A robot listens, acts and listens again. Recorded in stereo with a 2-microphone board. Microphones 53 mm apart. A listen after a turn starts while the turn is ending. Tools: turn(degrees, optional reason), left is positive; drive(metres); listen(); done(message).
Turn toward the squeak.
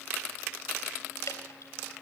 listen()
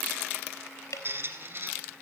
turn(degrees=-45, reason="The squeak: about 45° right or 135° right.")
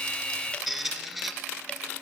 done("Found it: a squeak, straight ahead, 2 to 4 m away.")